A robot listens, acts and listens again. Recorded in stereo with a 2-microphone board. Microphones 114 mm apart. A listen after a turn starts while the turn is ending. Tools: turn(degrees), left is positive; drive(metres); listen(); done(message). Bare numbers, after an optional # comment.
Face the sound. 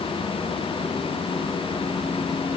listen()
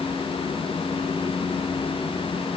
listen()
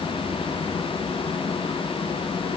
done("I can't make out anything to turn to.")